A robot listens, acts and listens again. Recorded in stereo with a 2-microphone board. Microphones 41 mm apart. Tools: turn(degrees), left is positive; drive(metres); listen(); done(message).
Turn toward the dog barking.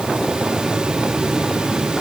listen()
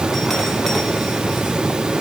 listen()
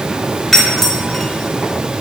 done("I can't make out a dog barking, only a doorbell.")